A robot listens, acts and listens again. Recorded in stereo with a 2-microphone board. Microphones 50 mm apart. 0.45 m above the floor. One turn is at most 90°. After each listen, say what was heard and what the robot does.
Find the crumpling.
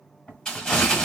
Turn 30° left.
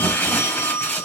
So it is at 135° left. Turn 90° left.
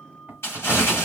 The crumpling is now 80° left. Turn 80° left.
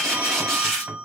The crumpling is now 10° left. Turn 10° left.
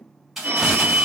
Facing the crumpling.